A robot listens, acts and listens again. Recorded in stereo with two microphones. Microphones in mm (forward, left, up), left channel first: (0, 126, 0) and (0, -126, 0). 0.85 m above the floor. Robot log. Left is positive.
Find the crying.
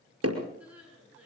cmd yaw -30
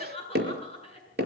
note: So it is at 25° left.
cmd yaw +25
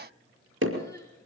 cmd idle
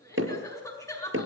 note: The crying is now 10° left.
cmd yaw +10
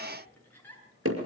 end: Facing the crying, over 4 m away.